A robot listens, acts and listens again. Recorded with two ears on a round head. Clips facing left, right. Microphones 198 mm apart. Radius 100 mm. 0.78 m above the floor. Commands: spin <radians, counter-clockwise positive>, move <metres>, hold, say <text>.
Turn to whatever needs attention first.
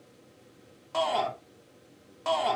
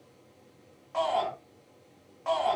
spin 0.87
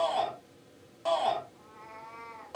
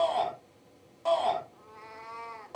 spin 0.17
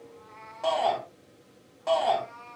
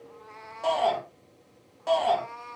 say Found it: a shout, straight ahead, 2 to 4 m away.